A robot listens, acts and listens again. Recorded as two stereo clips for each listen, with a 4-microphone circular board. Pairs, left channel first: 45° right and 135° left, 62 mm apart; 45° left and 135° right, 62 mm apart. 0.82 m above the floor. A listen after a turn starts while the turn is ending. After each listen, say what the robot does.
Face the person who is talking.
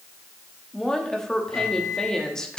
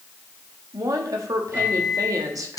Turn 125° right.
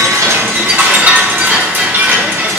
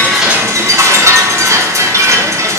Keep listening.
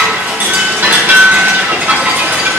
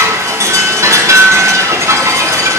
Keep listening.
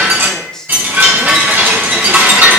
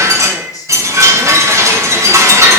Turn 35° left.
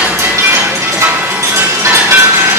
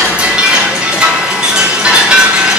Keep listening.
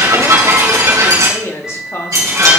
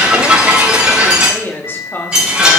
Facing the woman speaking, 1 to 2 m away.